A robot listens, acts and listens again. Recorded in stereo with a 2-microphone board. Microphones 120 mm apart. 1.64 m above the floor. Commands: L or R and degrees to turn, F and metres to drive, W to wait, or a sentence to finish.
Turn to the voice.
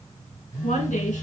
L90
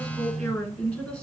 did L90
L15
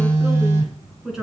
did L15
Found it: a woman speaking, straight ahead.